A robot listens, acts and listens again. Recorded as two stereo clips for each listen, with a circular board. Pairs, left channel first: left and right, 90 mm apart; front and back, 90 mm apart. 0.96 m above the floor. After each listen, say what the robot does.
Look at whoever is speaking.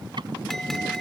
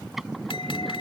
Keep listening.
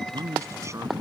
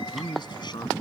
Turn 35° right.
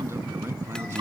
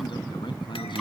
Turn 30° right.
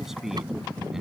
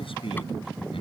Keep listening.
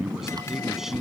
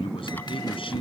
Keep listening.
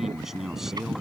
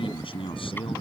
Facing the man speaking.